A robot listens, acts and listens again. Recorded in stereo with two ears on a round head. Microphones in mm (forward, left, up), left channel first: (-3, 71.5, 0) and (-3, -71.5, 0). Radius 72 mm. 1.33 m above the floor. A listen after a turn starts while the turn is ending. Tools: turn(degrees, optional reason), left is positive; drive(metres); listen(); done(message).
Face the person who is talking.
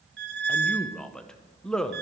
turn(degrees=30)
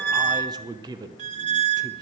turn(degrees=-25, reason="So it is at 25° right.")
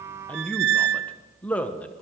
turn(degrees=10, reason="The man speaking is now 10° left.")
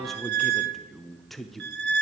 done("Found it: a man speaking, straight ahead, under 1 m away.")